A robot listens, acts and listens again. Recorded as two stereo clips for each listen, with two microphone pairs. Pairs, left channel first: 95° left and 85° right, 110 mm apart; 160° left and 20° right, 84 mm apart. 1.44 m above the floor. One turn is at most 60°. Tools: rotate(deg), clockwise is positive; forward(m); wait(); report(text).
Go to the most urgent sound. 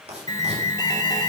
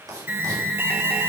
rotate(-45)
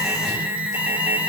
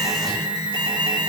rotate(10)
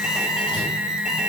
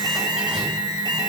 forward(1.0)
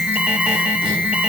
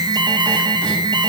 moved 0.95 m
forward(1.0)
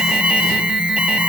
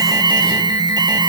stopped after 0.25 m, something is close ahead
report("I am next to the alarm.")